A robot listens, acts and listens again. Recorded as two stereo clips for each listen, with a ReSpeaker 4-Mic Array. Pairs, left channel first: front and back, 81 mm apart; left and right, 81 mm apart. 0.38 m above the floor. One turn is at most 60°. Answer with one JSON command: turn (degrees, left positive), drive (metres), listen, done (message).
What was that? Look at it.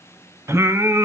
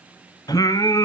{"turn": 60}
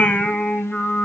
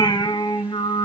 {"turn": 60}
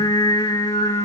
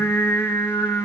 {"turn": 30}
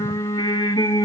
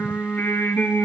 {"turn": 25}
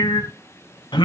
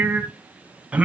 {"turn": -15}
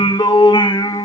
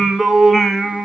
{"done": "Facing the singing, 1 to 2 m away."}